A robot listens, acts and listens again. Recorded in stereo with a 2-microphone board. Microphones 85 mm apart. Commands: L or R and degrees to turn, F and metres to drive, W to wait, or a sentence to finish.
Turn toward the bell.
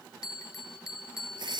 L45
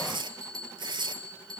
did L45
L90
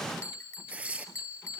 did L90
L35
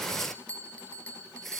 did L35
L15
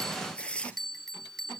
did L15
Facing the bell, 1 to 2 m away.